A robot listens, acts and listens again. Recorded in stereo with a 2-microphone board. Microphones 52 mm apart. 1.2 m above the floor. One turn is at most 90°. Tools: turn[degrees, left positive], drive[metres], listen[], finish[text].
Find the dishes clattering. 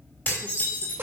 Thought: The dishes clattering: about 35° left or 145° left.
Action: turn[35]
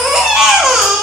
Action: listen[]
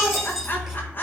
Action: finish[Found it: dishes clattering, straight ahead, 2 to 4 m away.]